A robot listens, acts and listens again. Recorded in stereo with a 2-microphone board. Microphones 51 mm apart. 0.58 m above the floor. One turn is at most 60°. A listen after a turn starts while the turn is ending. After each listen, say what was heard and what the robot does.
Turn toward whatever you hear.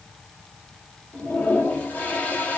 The toilet flushing: about 30° left or 150° left. Turn 30° left.
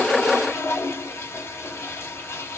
So it is at 115° left. Turn 60° left.
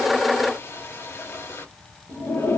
The toilet flushing is now 80° left. Turn 60° left.
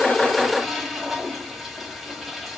Facing the toilet flushing.